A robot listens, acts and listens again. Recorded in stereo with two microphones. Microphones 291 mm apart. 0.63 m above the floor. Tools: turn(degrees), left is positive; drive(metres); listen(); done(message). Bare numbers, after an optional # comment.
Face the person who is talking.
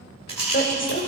# The woman speaking: about 40° left or 140° left.
turn(40)
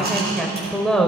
done("Facing the woman speaking, 2 to 4 m away.")